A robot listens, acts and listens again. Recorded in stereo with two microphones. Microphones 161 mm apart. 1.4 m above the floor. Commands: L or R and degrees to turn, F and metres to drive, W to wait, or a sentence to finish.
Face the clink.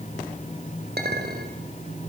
R90
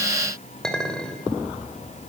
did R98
Facing the clink, over 4 m away.